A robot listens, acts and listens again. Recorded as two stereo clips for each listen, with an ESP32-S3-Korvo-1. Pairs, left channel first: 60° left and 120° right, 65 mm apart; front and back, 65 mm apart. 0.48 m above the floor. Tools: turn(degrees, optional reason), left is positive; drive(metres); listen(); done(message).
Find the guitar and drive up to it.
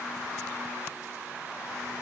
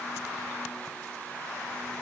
listen()
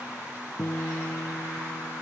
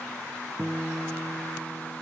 turn(degrees=120, reason="The guitar: 120° left.")
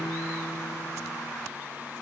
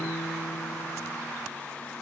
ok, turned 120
listen()
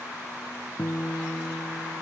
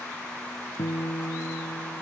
drive(metres=1.0)
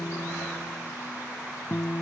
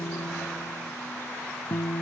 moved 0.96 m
drive(metres=1.0)
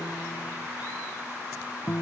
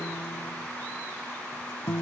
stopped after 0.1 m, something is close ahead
turn(degrees=10, reason="The guitar is now 10° left.")
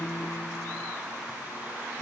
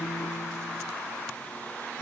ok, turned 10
done("Blocked. The guitar is further on, straight ahead.")